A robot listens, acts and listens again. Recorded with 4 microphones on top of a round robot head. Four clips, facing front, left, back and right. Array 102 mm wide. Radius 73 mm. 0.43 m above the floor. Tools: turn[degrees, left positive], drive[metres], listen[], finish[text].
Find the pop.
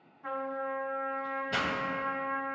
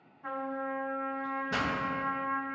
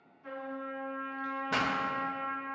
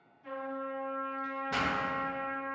Thought: The pop: 160° left.
Action: turn[160]
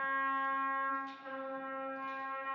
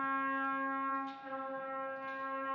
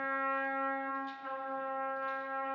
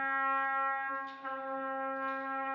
Action: finish[Facing where the pop came from. I can't hear it now.]